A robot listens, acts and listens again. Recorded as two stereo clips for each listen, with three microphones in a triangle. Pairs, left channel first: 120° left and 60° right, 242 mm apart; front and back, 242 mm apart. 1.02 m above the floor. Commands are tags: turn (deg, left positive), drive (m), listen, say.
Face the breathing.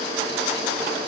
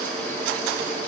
<listen/>
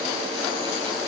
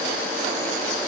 <listen/>
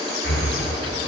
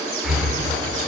<turn deg="90"/>
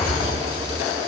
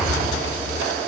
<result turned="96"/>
<say>Facing the breathing.</say>